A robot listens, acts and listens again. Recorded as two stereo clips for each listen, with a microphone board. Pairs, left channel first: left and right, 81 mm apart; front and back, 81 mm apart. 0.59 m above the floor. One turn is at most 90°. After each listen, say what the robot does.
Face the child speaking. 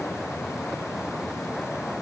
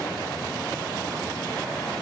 Keep listening.
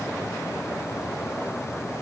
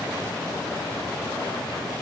Keep listening.
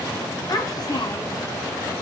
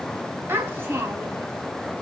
Turn 90° left.
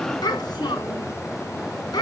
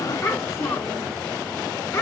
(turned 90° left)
Turn 55° left.
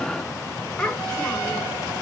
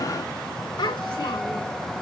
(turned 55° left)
Turn 10° left.
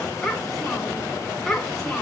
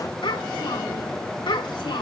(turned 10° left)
Found it: a child speaking, straight ahead, 2 to 4 m away.